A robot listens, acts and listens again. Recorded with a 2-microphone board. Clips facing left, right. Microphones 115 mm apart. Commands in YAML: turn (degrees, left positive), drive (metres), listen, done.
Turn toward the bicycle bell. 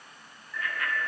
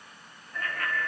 turn: -45
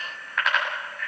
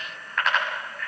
done: "Found it: a bicycle bell, straight ahead, over 4 m away."